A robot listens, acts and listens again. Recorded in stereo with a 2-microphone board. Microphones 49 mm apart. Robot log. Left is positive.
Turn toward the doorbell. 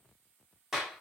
cmd idle
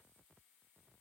cmd idle
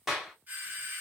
note: The doorbell: about 45° right or 135° right.
cmd yaw -45
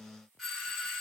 end: Facing the doorbell.